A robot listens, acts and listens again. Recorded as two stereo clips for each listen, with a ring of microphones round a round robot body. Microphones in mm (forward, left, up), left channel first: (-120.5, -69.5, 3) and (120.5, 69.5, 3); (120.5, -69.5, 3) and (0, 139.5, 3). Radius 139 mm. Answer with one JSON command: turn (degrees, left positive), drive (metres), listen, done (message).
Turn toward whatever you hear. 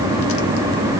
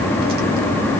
{"listen": true}
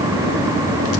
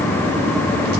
{"listen": true}
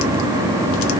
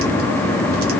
{"done": "I can't make out anything to turn to."}